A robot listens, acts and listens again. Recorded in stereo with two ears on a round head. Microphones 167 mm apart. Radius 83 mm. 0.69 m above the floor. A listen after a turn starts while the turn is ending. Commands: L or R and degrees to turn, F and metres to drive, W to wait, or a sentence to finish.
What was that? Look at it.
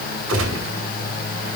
R90
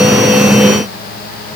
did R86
I heard a gunshot from this way, but can't make it out now.